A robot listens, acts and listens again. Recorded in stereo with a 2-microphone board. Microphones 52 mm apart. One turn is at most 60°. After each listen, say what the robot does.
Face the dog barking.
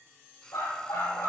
Turn 60° left.
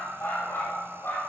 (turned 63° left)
Turn 50° left.
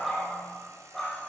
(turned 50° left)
Facing the dog barking.